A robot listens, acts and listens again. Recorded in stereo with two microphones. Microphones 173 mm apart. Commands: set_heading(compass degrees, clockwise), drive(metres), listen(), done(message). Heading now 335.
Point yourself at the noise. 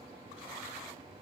listen()
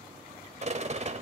set_heading(20)
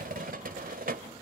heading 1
set_heading(101)
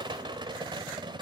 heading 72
set_heading(102)
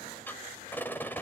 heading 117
set_heading(102)
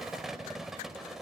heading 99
done("Facing the rattle, 2 to 4 m away.")